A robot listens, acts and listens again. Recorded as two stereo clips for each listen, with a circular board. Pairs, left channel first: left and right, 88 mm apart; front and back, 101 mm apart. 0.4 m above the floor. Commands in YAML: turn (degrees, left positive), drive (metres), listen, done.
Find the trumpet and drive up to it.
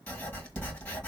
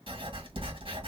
listen: true
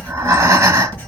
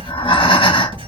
listen: true
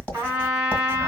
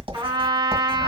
turn: -145
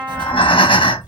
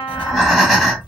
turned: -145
listen: true
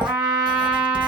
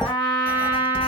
turn: -20
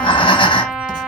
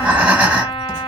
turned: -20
listen: true
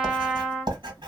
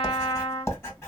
listen: true
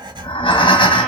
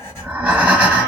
done: "Facing where the trumpet came from. I can't hear it now. I did not reach it."